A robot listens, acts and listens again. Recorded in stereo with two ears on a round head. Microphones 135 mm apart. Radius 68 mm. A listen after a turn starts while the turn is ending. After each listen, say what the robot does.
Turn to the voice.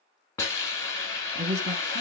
Turn 45° right.
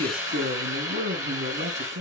Turn 95° right.
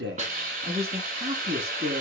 Turn 35° right.
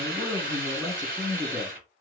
Facing the man speaking, 1 to 2 m away.